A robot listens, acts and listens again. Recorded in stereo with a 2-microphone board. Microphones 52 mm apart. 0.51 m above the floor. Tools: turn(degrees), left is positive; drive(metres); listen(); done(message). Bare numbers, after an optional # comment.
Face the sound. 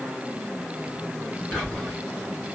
turn(30)
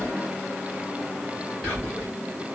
# So it is at 150° left.
turn(150)
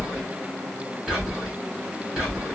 # The whispering is now 10° right.
turn(-10)
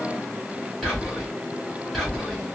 done("Facing the whispering.")